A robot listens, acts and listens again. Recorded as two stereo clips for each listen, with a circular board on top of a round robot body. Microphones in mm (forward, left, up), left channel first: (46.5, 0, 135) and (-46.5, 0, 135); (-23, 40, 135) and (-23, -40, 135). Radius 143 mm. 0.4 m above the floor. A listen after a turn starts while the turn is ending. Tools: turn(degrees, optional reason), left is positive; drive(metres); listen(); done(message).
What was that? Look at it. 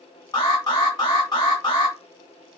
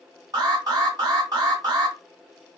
turn(degrees=-45, reason="The alarm: 45° right.")
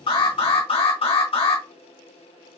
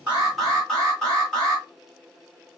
done("Found it: an alarm, straight ahead, 2 to 4 m away.")